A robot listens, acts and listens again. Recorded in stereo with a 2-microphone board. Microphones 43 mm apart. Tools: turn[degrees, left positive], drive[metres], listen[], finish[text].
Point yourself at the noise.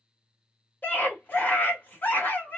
Thought: The scream: about 40° left or 140° left.
Action: turn[40]
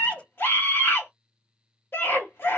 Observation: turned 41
Thought: So it is at 90° left.
Action: turn[90]
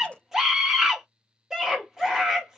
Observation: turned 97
Thought: The scream is now 10° right.
Action: turn[-10]
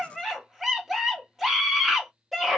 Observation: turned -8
Action: finish[Facing the scream, 1 to 2 m away.]